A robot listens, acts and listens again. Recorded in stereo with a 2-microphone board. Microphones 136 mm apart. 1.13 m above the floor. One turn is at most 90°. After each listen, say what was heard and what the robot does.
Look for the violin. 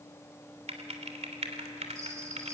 Keep listening.
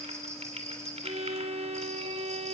The violin: about 55° right or 125° right. Turn 55° right.
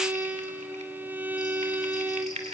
So it is at 20° right. Turn 20° right.
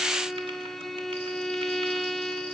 Facing the violin, under 1 m away.